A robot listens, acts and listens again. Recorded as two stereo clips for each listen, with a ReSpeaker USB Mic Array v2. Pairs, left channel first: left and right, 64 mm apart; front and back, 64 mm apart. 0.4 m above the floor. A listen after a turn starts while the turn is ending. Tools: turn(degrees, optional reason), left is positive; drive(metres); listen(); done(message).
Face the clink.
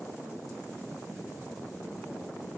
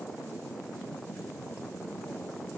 listen()
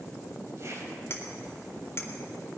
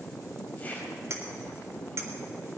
turn(degrees=135, reason="The clink: 135° left.")
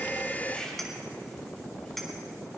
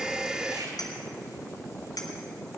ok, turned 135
done("Facing the clink.")